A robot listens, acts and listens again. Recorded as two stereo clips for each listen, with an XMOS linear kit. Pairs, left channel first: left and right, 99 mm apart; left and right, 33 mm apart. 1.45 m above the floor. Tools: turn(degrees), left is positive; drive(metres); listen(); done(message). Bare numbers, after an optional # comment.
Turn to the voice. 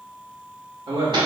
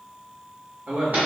# The man speaking: about 65° right or 115° right.
turn(-65)
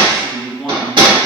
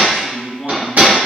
done("Found it: a man speaking, straight ahead, 1 to 2 m away.")